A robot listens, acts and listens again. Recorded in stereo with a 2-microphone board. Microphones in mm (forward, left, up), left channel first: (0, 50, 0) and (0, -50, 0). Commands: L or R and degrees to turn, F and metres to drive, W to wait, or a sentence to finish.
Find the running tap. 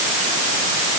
W
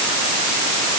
W
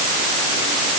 I can't make out a running tap to turn to.